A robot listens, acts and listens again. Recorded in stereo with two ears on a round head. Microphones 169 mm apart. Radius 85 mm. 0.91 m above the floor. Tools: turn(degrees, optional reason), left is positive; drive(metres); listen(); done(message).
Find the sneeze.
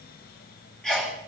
turn(degrees=30)
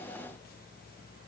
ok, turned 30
listen()
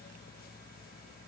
done("I heard a sneeze, but can't make it out now. It was about 25° right or 145° left.")